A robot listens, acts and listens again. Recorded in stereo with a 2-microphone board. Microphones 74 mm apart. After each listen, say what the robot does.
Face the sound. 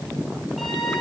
Turn 30° left.
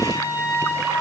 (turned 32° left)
Turn 35° right.
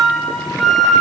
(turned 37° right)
Found it: a flute, straight ahead, over 4 m away.